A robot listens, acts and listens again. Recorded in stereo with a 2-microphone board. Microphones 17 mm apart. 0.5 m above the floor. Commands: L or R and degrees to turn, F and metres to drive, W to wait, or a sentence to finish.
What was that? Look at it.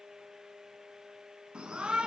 R90
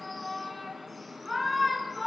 Facing the shout, over 4 m away.